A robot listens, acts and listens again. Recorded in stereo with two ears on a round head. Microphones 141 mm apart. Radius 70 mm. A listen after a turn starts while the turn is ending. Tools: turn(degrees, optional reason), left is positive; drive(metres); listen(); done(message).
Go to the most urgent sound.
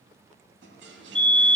turn(degrees=30)
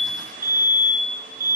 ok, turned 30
turn(degrees=-25, reason="So it is at 25° right.")
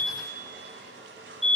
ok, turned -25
drive(metres=1.0)
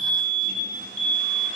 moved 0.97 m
turn(degrees=10, reason="The fire alarm is now 10° left.")
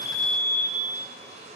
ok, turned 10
drive(metres=1.0)
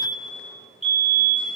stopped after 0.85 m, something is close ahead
turn(degrees=-10, reason="The fire alarm is now 10° right.")
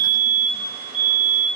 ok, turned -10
done("I am next to the fire alarm.")